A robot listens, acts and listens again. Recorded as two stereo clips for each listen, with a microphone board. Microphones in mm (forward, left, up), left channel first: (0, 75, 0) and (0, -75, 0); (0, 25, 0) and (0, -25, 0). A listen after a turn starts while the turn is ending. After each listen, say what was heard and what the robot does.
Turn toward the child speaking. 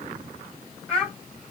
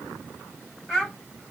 Turn 30° left.
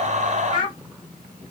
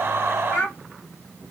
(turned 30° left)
So it is at 140° left. Turn 140° left.
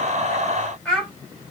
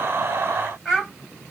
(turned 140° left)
Found it: a child speaking, straight ahead, 2 to 4 m away.